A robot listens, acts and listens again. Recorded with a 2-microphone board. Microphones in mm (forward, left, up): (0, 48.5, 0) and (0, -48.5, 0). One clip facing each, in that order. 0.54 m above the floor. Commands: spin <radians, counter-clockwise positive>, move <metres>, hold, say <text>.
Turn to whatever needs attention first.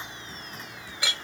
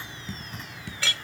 hold
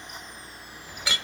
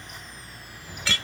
hold
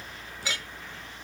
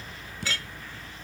say I can't make out anything urgent, only a clink and dripping.